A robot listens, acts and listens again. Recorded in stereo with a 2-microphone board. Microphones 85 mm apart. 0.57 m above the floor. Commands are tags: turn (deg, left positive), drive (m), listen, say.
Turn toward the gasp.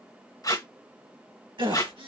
<turn deg="-60"/>
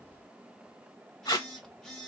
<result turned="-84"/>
<listen/>
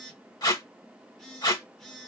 <say>I heard a gasp, but can't make it out now. It was about 25° left or 35° right.</say>